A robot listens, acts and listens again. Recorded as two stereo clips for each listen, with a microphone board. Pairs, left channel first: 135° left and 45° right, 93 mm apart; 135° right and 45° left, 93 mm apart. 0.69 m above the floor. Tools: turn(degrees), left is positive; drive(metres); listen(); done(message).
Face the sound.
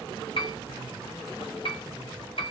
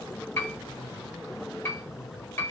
turn(degrees=160)
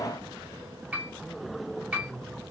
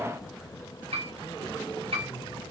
turn(degrees=30)
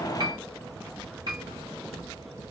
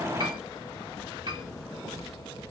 done("Facing the piano, under 1 m away.")